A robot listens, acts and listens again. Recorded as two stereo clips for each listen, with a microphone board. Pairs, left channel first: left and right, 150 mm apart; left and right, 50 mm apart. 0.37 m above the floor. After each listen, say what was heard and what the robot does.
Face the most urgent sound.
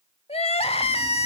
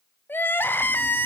The crying: about 45° left or 135° left. Turn 45° left.
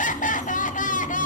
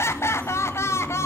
So it is at 85° left. Turn 85° left.
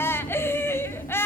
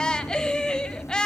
The crying is now 20° left. Turn 20° left.
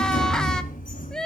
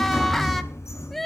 Found it: crying, straight ahead.